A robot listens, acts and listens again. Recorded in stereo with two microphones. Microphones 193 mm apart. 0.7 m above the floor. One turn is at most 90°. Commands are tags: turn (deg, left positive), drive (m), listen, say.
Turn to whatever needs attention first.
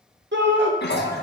<turn deg="-70"/>
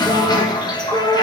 <turn deg="-20"/>
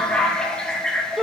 <say>Found it: a shout, straight ahead, 1 to 2 m away.</say>